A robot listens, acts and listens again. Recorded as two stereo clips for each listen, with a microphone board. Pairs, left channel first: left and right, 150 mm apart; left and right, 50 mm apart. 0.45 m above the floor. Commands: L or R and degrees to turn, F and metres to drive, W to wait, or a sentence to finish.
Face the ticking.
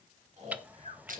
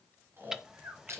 R30
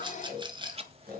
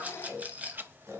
W
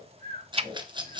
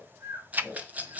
R140
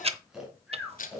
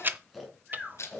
R45
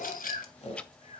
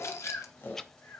W
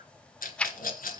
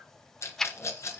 Facing the ticking.